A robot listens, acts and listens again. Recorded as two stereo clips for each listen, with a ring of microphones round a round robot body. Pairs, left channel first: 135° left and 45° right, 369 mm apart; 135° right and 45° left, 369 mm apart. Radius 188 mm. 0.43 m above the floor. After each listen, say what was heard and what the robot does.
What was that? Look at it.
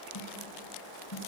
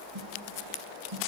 The snare drum: 85° left. Turn 85° left.
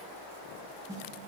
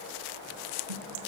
The snare drum is now 35° left. Turn 35° left.
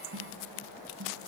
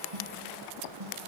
The snare drum is now 10° left. Turn 10° left.
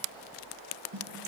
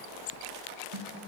Found it: a snare drum, straight ahead.